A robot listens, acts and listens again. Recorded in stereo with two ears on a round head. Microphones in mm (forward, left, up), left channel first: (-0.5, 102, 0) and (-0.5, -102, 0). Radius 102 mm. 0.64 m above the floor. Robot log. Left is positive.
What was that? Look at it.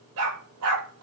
note: The dog barking: about 75° right or 105° right.
cmd yaw -75
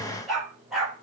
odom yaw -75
end: Found it: a dog barking, straight ahead, over 4 m away.